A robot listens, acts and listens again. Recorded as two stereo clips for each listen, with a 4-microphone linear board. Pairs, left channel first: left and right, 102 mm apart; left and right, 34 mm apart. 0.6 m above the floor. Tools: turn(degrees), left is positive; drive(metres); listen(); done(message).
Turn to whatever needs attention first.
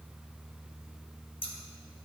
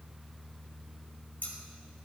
listen()
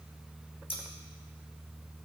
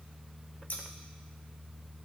listen()
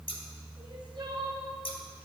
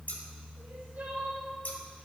turn(degrees=-50)
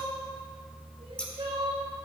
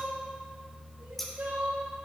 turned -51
turn(degrees=-75)
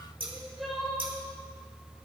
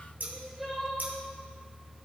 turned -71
done("Found it: crying, straight ahead, 2 to 4 m away.")